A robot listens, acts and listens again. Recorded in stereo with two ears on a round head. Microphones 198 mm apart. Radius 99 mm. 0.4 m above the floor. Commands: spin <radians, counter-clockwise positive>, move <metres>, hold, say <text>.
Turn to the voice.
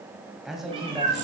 spin 0.52
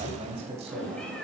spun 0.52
spin -0.52
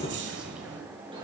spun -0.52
hold
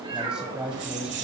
say Found it: a man speaking, straight ahead, 1 to 2 m away.